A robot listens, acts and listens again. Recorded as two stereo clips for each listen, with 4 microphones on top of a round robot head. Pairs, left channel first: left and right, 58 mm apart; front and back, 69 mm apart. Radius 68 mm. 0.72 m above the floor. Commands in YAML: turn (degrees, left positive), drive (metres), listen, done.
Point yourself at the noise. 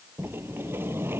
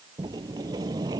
turn: -140
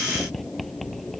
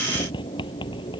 done: "Facing the sliding door."